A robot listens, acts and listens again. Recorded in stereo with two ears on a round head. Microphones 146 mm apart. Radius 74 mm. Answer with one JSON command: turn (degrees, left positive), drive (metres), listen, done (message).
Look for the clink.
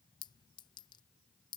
{"turn": 25}
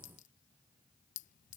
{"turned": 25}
{"turn": 125}
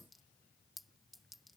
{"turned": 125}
{"done": "Facing the clink."}